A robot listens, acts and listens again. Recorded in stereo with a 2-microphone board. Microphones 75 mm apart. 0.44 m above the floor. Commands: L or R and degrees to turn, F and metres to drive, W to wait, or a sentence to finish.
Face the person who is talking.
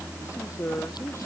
L40
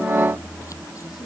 W
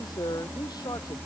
L100
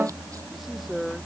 Facing the man speaking.